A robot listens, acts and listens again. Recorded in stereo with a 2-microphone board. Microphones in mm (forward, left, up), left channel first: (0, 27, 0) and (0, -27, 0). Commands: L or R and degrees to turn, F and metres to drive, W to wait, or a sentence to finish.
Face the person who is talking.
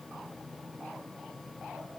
W
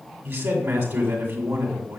R40
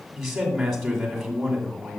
Facing the man speaking, 2 to 4 m away.